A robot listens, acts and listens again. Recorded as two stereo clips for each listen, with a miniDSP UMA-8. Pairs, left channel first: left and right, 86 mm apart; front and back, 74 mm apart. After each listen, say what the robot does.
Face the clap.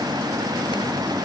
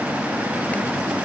Keep listening.
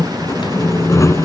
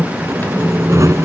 Keep listening.
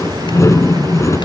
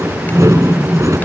I can't make out a clap, only sawing.